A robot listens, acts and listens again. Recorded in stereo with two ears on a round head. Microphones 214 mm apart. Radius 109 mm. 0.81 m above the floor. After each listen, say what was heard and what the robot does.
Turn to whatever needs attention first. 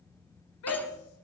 The shout: about 70° left or 110° left. Turn 70° left.
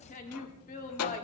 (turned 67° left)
So it is at 35° left. Turn 35° left.
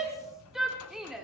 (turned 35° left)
Found it: a shout, straight ahead, 2 to 4 m away.